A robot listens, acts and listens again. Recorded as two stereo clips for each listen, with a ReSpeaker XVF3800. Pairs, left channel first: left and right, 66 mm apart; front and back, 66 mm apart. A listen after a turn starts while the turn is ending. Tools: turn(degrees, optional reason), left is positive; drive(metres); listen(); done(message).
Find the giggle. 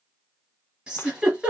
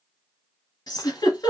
turn(degrees=-15, reason="The giggle: 15° right.")
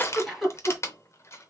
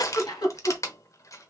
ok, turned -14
done("Facing the giggle.")